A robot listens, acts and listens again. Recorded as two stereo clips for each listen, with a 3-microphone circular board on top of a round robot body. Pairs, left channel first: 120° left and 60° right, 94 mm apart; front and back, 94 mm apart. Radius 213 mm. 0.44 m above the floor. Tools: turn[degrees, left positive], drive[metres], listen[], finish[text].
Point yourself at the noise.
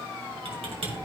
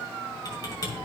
Thought: The typing on a keyboard: 50° right.
Action: turn[-50]
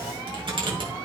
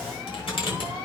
Thought: The typing on a keyboard is now 30° right.
Action: turn[-30]
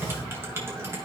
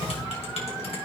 Action: finish[Found it: typing on a keyboard, straight ahead, 2 to 4 m away.]